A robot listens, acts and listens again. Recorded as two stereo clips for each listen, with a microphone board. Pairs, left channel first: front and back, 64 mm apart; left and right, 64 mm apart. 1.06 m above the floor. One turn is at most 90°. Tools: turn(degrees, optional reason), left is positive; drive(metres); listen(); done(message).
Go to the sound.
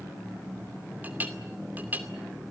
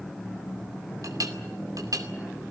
turn(degrees=-90, reason="The clink: 120° right.")
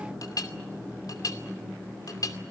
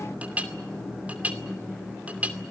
turn(degrees=-25, reason="The clink is now 25° right.")
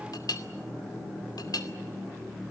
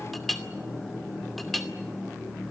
drive(metres=1.0)
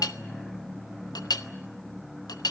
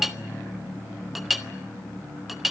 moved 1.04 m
drive(metres=1.0)
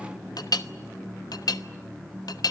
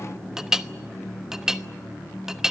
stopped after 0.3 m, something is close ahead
turn(degrees=-10, reason="The clink is now 10° right.")
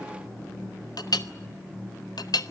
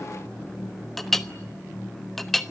done("Arrived at the clink, straight ahead.")